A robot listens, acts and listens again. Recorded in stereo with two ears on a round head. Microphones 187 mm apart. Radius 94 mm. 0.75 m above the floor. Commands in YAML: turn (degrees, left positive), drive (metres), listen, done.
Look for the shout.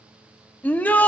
turn: 30
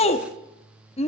turn: 145
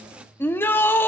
turn: 10
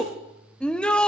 done: "Facing the shout."